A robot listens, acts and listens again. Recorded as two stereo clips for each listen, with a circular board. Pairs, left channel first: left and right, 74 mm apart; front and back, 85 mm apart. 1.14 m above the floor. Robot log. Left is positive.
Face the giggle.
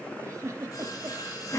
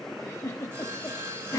note: The giggle: 50° right.
cmd yaw -50
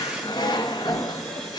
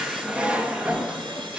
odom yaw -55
cmd idle
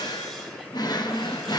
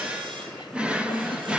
cmd idle
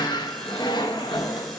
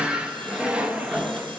end: Facing where the giggle came from. I can't hear it now.